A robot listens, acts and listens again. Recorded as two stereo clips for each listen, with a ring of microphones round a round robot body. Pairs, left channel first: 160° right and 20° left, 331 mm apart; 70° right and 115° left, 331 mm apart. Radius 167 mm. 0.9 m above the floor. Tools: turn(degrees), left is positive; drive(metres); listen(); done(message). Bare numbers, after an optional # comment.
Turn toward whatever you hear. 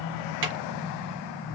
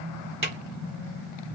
# The drawer: 40° left.
turn(40)
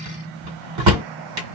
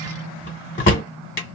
done("Facing the drawer.")